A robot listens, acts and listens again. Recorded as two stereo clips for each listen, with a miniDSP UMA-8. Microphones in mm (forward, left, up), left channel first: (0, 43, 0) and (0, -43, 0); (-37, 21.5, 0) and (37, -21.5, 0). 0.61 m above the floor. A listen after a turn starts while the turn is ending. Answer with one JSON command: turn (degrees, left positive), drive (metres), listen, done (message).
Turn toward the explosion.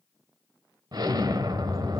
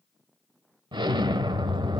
{"turn": -55}
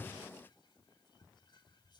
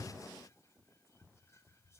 {"done": "I heard an explosion from this way, but can't make it out now."}